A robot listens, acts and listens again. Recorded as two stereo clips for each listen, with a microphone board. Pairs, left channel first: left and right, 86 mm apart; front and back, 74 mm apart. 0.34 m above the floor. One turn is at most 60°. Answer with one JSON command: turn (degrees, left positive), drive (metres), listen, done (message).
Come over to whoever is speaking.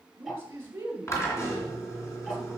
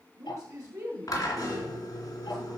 {"turn": -60}
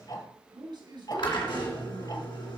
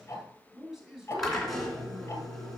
{"turn": -60}
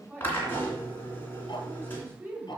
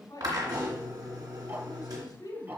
{"turn": -30}
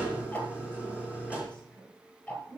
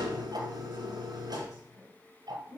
{"turn": 15}
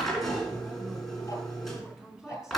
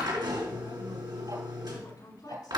{"drive": 1.0}
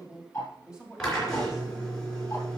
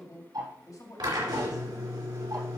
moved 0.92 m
{"turn": -10}
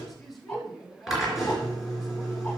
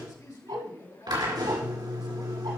{"drive": 1.0}
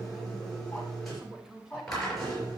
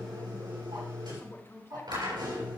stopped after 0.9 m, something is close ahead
{"turn": -10}
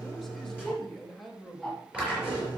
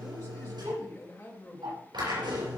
{"done": "Arrived at the man speaking, straight ahead."}